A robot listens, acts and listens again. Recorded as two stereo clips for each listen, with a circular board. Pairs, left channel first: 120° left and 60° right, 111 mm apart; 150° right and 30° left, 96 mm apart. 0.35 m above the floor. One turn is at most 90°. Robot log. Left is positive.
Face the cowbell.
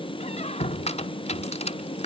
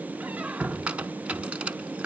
cmd idle
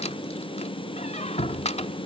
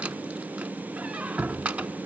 cmd idle
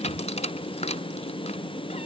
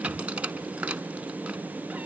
end: I can't make out a cowbell, only a squeak.